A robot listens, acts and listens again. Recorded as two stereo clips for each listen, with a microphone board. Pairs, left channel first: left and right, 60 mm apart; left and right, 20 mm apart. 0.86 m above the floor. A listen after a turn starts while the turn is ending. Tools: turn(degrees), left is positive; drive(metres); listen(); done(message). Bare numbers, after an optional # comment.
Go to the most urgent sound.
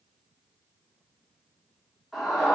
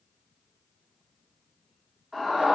turn(30)
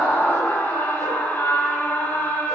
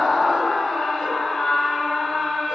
# So it is at 150° left.
turn(150)
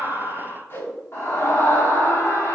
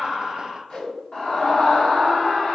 # The scream is now 50° left.
turn(50)
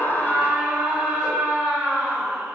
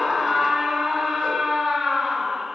# The scream is now 15° right.
turn(-15)
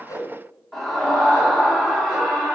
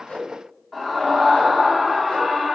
drive(1.0)
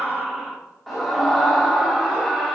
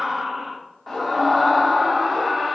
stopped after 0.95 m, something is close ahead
done("Arrived at the scream, straight ahead.")